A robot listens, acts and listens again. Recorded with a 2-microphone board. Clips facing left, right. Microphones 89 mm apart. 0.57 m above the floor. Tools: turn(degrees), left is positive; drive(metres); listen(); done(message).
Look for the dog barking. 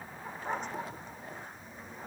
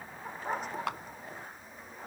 turn(degrees=-30)
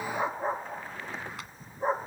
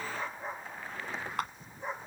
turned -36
turn(degrees=35)
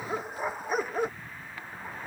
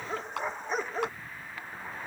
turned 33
done("Found it: a dog barking, straight ahead.")